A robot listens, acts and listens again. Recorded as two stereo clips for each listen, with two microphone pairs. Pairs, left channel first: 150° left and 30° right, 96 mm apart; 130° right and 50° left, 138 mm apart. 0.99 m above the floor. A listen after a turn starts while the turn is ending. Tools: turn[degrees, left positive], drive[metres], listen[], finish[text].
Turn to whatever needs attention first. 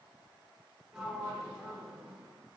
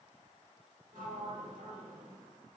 Action: listen[]
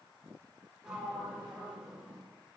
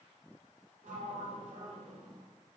Action: listen[]
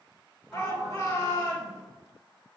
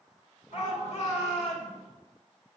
Thought: The shout: 160° right.
Action: turn[-160]
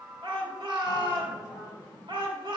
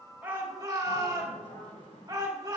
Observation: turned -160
Thought: The shout is now 10° right.
Action: turn[-10]
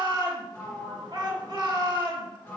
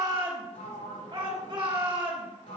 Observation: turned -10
Action: finish[Found it: a shout, straight ahead.]